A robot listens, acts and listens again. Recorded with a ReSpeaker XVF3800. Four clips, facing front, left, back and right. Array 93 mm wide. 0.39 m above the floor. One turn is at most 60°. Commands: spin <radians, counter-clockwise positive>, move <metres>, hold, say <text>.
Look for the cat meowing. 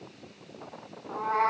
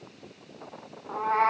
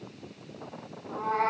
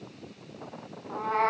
spin 1.05
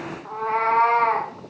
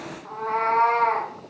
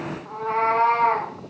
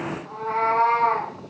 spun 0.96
spin 0.35
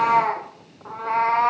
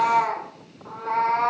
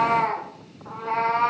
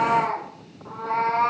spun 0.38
say Facing the cat meowing, over 4 m away.